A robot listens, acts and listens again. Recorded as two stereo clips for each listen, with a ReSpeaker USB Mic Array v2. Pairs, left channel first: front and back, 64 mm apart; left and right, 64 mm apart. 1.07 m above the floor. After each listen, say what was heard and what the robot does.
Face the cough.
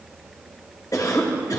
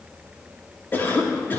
The cough: 30° left. Turn 30° left.
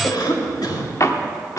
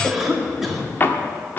Facing the cough.